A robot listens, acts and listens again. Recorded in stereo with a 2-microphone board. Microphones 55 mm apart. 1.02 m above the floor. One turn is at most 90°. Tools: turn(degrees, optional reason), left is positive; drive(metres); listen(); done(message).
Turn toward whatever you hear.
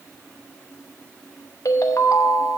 turn(degrees=75, reason="The ringtone: about 75° left or 105° left.")
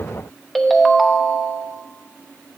done("Facing the ringtone.")